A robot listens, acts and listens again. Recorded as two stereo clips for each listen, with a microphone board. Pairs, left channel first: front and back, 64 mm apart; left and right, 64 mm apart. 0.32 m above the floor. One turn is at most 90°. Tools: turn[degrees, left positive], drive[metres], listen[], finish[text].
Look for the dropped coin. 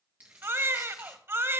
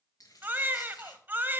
Thought: The dropped coin: 115° left.
Action: turn[90]
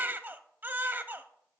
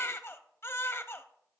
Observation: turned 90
Thought: Nothing new. It was at 25° left.
Action: turn[25]
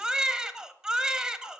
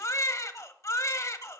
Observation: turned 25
Action: finish[I heard a dropped coin from this way, but can't make it out now.]